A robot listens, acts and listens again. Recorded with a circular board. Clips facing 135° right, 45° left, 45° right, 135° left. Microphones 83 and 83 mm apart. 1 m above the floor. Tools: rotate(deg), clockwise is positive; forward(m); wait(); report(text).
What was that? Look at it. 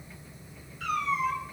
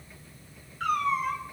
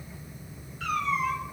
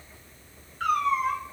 rotate(-85)
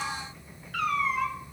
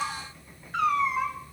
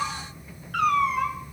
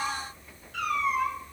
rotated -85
rotate(25)
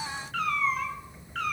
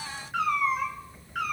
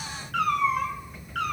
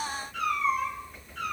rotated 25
rotate(35)
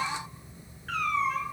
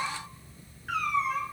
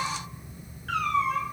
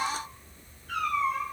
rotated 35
rotate(40)
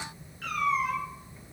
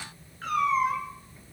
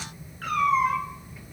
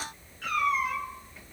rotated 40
report("Found it: a cat meowing, straight ahead.")